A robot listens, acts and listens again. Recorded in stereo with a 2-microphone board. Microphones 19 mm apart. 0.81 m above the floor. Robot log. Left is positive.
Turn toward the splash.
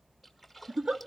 cmd yaw -30
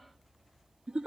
cmd idle
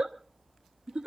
end: I heard a splash, but can't make it out now. It was about 25° left or 145° right.